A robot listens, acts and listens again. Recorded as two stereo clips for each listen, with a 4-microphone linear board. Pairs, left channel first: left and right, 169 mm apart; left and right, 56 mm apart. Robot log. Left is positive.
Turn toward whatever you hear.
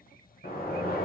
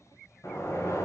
note: The sliding door: about 65° left or 115° left.
cmd yaw +65
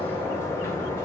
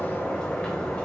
note: So it is at 15° left.
cmd yaw +15
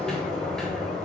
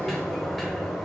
end: Found it: a sliding door, straight ahead.